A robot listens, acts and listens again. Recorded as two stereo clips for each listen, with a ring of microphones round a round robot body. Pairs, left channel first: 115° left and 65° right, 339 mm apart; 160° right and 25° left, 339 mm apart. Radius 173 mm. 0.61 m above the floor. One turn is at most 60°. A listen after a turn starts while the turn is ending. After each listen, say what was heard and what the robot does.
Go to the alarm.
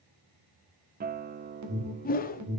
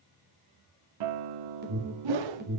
The alarm: 35° right. Turn 35° right.
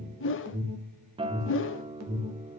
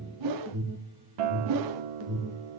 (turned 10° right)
The alarm is now 25° right. Turn 25° right.
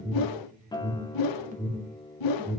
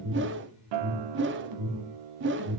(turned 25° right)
Drive 1.0 m forward.
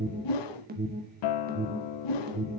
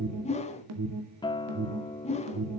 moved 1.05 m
The alarm is now 10° right. Turn 10° right.
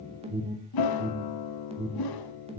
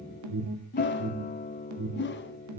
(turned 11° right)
Drive 1.0 m forward.
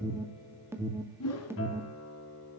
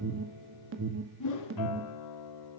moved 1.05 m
The alarm is now 10° left. Turn 10° left.
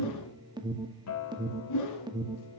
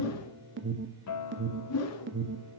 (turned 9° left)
Drive 1.0 m forward.
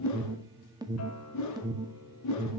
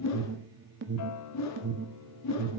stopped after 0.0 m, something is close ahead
I am next to the alarm.